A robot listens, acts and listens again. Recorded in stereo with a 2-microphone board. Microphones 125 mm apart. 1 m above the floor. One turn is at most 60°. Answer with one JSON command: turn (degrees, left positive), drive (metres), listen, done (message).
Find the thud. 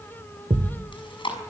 {"turn": -60}
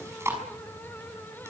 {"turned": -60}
{"listen": true}
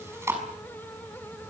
{"done": "I heard a thud, but can't make it out now. It was about straight ahead or 60° right."}